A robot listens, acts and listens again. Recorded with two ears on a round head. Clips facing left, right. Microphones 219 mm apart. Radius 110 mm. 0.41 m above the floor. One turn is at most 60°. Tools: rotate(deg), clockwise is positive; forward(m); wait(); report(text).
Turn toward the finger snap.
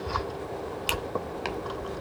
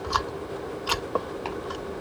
wait()
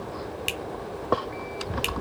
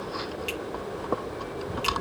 rotate(-60)
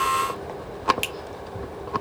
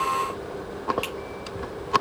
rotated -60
rotate(-45)
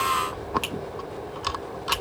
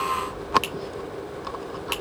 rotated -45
report("Facing the finger snap, 1 to 2 m away.")